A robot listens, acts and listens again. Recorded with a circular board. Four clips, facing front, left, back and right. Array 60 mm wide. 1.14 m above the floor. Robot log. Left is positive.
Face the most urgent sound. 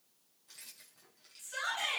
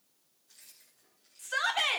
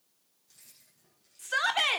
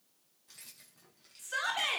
note: The shout: 160° left.
cmd yaw +160
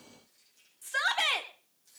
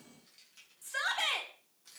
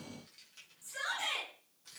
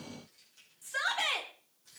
end: Facing the shout, 2 to 4 m away.